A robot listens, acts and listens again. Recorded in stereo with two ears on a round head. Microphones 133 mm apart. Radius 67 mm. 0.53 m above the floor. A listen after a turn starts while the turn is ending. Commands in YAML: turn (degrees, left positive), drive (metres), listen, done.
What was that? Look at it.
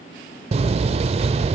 turn: -45
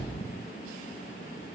listen: true
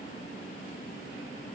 done: "I heard a door slam, but can't make it out now. It was about straight ahead or 90° right."